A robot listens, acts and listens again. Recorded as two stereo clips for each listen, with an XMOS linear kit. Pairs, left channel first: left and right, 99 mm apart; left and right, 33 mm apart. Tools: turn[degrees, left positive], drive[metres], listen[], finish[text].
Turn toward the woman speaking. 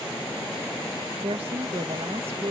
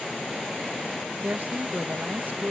Action: turn[-90]
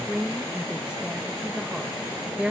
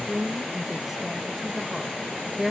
Thought: So it is at 10° right.
Action: turn[-10]
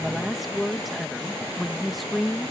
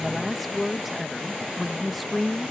Action: finish[Found it: a woman speaking, straight ahead.]